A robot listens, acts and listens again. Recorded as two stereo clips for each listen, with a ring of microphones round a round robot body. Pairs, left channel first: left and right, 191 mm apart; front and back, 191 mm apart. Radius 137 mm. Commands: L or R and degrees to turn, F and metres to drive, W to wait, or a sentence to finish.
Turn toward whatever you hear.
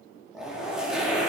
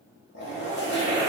Found it: a zipper, straight ahead.